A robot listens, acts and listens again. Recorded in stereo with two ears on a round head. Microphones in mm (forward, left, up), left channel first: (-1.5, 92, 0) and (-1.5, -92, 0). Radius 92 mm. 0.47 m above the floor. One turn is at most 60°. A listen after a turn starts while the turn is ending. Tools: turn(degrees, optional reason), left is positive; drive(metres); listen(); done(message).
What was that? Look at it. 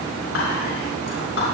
turn(degrees=60, reason="The whispering: about 65° left or 115° left.")
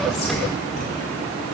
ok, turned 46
listen()
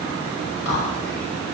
turn(degrees=60, reason="So it is at 65° left.")
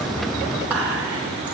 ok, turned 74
done("Found it: whispering, straight ahead, 2 to 4 m away.")